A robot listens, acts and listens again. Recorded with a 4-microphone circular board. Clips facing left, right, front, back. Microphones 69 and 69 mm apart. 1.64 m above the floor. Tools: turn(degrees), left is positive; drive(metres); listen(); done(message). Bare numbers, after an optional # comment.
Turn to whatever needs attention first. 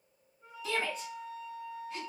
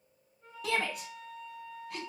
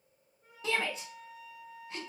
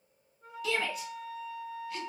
# The shout: 60° right.
turn(-60)
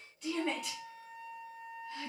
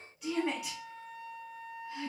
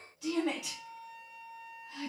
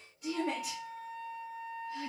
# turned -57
done("Found it: a shout, straight ahead, 1 to 2 m away.")